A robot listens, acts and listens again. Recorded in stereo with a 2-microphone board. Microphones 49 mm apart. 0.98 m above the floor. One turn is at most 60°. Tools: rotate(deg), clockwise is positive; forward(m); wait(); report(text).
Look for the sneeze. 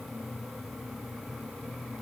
wait()
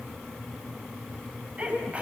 rotate(30)
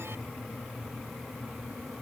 wait()
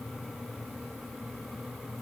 report("I heard a sneeze, but can't make it out now. It was about straight ahead or 120° right.")